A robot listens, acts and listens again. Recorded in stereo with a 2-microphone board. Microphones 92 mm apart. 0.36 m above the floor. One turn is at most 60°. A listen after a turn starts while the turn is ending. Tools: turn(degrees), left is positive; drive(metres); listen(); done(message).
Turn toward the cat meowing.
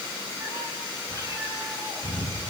turn(degrees=-35)
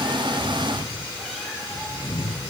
done("Found it: a cat meowing, straight ahead.")